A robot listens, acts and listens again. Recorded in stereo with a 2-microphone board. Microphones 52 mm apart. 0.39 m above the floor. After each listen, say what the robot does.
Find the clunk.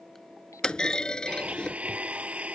Turn 30° left.
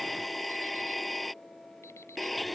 Keep listening.
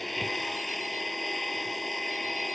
I heard a clunk, but can't make it out now. It was about 15° right or 135° left.